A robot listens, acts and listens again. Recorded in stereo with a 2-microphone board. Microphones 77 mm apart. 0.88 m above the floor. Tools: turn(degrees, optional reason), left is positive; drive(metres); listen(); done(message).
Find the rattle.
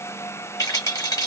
turn(degrees=55, reason="The rattle: about 55° left or 125° left.")
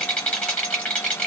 turn(degrees=15, reason="So it is at 15° left.")
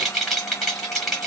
done("Found it: a rattle, straight ahead.")